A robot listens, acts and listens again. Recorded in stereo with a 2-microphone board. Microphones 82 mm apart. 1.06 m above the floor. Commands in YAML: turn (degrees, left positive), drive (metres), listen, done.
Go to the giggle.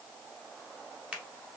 listen: true
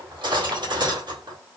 listen: true
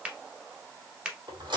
done: "I can't make out a giggle to turn to."